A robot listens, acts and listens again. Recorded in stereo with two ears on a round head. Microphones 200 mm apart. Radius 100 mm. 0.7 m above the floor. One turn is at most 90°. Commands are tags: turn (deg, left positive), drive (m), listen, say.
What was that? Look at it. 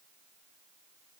<listen/>
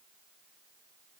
<listen/>
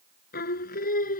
<turn deg="40"/>
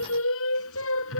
<turn deg="90"/>
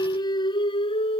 <turn deg="25"/>
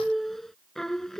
<say>Found it: singing, straight ahead.</say>